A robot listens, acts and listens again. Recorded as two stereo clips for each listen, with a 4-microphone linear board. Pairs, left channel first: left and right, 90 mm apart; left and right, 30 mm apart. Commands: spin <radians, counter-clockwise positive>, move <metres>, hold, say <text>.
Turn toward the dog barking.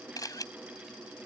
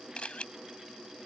hold
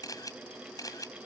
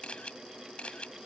hold
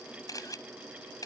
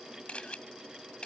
say I can't make out a dog barking to turn to.